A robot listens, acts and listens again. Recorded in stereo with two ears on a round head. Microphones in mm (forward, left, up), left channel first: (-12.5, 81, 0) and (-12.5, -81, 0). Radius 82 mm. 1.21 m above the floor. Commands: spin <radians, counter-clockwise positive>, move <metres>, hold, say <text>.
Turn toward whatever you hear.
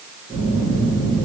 spin -0.35
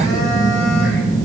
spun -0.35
say Facing the phone buzzing, 1 to 2 m away.